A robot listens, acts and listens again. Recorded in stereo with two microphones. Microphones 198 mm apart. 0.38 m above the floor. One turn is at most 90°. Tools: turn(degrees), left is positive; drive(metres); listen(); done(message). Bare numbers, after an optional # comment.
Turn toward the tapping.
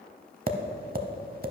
# The tapping: about 50° right or 130° right.
turn(-50)
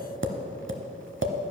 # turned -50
# So it is at 80° right.
turn(-80)
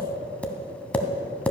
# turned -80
done("Found it: tapping, straight ahead.")